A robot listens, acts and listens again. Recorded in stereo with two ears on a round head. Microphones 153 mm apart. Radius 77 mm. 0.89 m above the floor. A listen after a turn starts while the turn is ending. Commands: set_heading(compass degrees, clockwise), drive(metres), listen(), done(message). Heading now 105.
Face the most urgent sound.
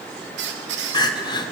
set_heading(80)
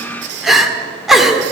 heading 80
done("Found it: crying, straight ahead, 1 to 2 m away.")